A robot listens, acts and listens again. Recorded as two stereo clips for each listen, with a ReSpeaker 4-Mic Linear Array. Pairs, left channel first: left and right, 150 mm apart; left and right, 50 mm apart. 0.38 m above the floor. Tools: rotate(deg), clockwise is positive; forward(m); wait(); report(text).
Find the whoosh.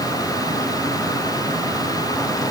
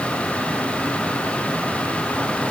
wait()
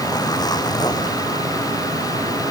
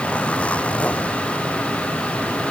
wait()
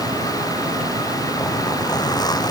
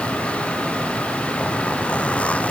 report("I can't make out a whoosh, only a zipper.")